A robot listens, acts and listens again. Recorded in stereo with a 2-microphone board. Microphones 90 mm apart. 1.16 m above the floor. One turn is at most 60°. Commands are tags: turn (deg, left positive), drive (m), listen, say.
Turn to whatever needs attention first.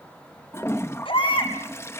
<turn deg="60"/>
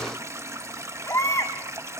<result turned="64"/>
<turn deg="35"/>
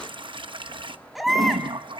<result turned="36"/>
<say>Facing the baby crying.</say>